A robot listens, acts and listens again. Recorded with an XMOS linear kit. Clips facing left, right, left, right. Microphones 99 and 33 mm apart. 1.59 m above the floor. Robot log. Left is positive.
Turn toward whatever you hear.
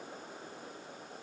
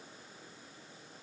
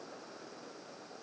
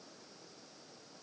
cmd idle
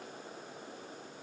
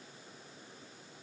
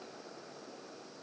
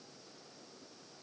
cmd idle
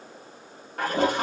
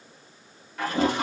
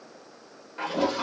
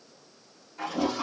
note: The toilet flushing: about 50° left or 130° left.
cmd yaw +50
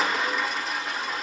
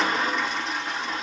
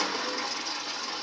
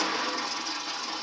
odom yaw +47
end: Facing the toilet flushing.